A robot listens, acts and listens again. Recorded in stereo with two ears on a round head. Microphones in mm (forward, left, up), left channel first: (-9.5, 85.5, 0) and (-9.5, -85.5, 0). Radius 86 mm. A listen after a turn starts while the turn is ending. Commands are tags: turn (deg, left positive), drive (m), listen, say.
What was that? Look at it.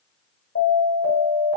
<turn deg="60"/>
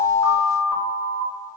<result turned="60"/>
<say>Facing the alarm.</say>